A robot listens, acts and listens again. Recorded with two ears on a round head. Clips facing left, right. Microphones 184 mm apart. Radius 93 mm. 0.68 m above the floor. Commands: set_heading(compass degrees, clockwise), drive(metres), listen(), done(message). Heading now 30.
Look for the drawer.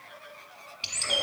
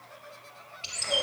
listen()
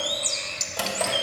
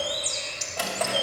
set_heading(355)
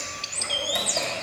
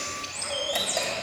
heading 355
listen()
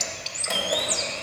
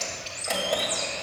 listen()
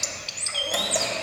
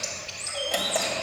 done("I heard a drawer, but can't make it out now. It was about straight ahead or 110° left.")